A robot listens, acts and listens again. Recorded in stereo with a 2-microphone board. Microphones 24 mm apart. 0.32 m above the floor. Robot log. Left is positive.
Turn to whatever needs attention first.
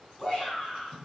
note: The shout: about 30° left or 150° left.
cmd yaw +30
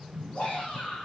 note: So it is at 120° left.
cmd yaw +120
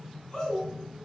note: The shout is now 25° left.
cmd yaw +25
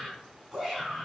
note: The shout is now 15° right.
cmd yaw -15
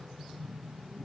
cmd idle
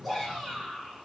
end: Found it: a shout, straight ahead.